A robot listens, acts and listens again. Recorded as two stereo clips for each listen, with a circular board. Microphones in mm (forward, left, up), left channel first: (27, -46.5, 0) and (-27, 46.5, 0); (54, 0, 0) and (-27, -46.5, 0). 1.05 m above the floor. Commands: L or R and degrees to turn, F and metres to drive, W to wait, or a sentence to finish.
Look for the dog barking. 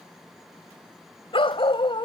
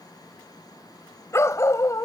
R25
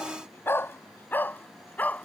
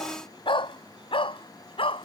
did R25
L15
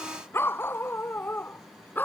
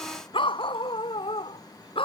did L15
L10
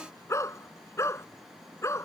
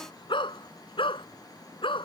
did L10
Found it: a dog barking, straight ahead.